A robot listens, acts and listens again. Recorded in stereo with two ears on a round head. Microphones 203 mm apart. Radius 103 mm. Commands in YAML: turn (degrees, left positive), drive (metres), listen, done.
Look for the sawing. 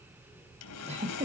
turn: 90
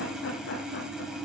done: "Facing the sawing, 2 to 4 m away."